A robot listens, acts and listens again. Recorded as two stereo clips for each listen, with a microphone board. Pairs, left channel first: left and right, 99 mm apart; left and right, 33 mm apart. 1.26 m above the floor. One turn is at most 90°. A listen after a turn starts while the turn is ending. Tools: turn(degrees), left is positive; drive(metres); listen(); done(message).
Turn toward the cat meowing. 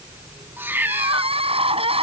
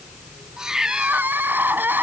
turn(degrees=-20)
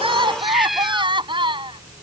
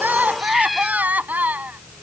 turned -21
done("Facing the cat meowing.")